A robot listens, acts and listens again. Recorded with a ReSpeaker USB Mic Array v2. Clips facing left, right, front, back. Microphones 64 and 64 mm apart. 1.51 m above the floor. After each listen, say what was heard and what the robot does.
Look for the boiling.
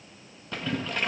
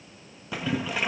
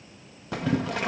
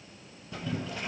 The boiling: 10° right. Turn 10° right.
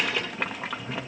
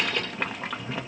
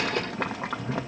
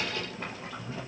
Facing the boiling, 1 to 2 m away.